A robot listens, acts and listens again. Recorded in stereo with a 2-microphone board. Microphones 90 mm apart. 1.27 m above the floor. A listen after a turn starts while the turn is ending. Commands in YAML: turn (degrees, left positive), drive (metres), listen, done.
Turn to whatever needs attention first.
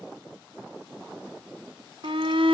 turn: -75
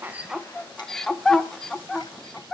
done: "Found it: a shout, straight ahead."